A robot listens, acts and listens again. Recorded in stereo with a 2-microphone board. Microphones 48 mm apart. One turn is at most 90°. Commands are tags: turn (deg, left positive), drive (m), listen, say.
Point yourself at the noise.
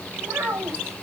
<turn deg="-70"/>
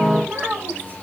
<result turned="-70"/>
<turn deg="-35"/>
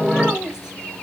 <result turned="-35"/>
<turn deg="-10"/>
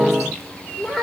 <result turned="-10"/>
<say>Found it: a child speaking, straight ahead.</say>